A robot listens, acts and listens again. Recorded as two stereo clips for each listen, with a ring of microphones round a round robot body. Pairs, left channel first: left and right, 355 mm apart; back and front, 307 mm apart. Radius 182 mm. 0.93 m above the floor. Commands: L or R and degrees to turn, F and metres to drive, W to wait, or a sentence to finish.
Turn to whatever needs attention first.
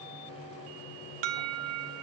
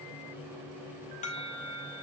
R110
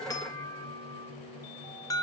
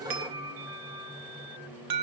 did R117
L10
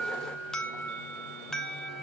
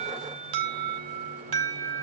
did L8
Facing the alarm, 1 to 2 m away.